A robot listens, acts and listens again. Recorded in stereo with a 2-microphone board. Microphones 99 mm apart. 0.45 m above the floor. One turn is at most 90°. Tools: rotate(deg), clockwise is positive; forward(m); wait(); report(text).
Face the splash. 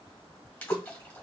rotate(-30)
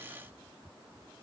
wait()
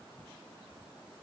report("I heard a splash, but can't make it out now. It was about 15° right or 135° left.")